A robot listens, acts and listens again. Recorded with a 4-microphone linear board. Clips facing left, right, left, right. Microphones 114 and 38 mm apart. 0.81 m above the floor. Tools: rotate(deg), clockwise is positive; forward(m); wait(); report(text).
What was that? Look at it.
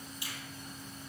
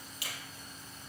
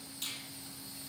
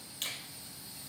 rotate(75)
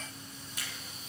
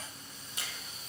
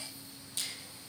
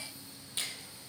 rotate(30)
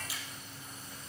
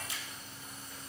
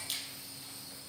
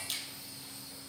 report("Facing the finger snap, 1 to 2 m away.")